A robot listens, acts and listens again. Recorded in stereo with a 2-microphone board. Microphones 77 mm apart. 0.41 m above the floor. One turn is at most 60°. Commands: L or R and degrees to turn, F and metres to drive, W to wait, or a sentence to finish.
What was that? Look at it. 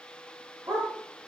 R45
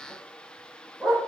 Facing the dog barking, over 4 m away.